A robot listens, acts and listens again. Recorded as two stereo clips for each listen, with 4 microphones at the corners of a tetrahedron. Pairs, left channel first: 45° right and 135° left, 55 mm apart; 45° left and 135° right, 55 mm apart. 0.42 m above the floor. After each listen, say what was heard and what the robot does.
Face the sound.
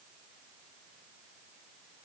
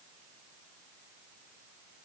Keep listening.
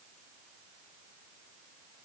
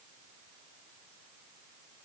Keep listening.
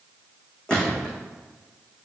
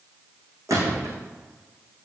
The gunshot: 115° right. Turn 115° right.
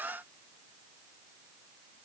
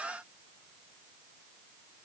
Facing where the gunshot came from. I can't hear it now.